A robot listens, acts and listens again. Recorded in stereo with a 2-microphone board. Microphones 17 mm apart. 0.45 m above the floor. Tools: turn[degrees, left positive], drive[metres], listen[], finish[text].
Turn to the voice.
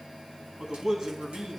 Thought: The man speaking: about 35° right or 145° right.
Action: turn[-35]
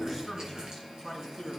Action: finish[Facing the man speaking.]